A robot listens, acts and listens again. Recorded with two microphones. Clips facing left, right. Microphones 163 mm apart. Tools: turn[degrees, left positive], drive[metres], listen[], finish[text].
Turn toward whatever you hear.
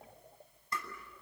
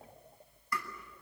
Thought: The tapping: about 25° left or 155° left.
Action: turn[25]
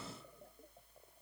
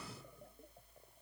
Action: listen[]
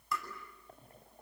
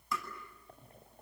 Action: finish[Facing the tapping, over 4 m away.]